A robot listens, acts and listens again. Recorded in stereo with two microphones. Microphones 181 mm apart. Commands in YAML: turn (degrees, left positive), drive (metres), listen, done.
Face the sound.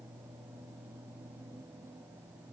listen: true
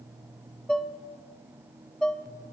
turn: 30
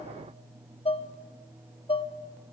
turn: 150
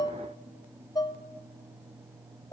turn: 25
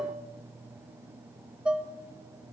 done: "Found it: dishes clattering, straight ahead."